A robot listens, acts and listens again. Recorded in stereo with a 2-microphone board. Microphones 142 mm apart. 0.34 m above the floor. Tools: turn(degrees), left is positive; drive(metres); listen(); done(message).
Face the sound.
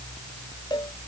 turn(degrees=30)
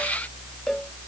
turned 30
done("Facing the cowbell.")